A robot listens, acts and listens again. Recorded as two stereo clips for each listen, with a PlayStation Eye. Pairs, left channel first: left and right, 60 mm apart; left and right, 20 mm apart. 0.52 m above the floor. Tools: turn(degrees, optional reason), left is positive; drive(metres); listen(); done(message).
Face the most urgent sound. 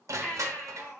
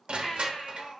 turn(degrees=20, reason="The baby crying: about 20° left or 160° left.")
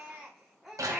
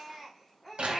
done("Facing the baby crying.")